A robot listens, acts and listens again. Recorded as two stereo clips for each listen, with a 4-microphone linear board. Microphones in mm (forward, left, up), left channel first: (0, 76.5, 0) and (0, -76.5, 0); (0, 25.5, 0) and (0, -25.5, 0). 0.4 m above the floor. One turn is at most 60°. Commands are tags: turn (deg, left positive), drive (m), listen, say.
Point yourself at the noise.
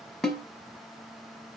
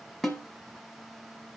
<turn deg="30"/>
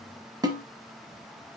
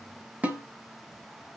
<turn deg="-25"/>
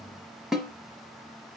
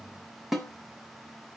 <say>Found it: a snare drum, straight ahead, 1 to 2 m away.</say>